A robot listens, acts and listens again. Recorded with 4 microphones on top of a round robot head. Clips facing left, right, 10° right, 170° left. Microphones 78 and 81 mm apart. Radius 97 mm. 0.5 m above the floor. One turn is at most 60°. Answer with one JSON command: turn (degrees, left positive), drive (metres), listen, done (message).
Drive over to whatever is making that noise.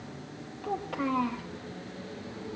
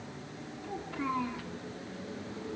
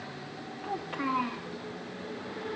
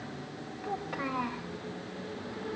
{"turn": 60}
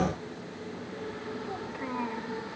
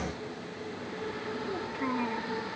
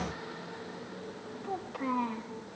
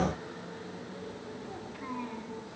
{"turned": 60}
{"turn": 10}
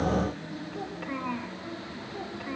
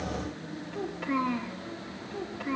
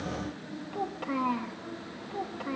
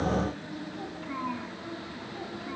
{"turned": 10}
{"drive": 1.0}
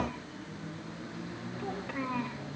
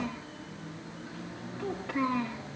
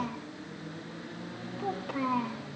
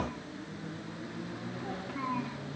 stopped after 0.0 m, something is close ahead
{"done": "Blocked. The child speaking is further on, straight ahead."}